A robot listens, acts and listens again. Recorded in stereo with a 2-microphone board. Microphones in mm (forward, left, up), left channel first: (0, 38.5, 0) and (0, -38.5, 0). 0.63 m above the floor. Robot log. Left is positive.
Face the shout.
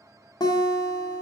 cmd idle
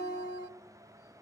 cmd idle
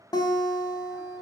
end: I can't make out a shout, only a guitar.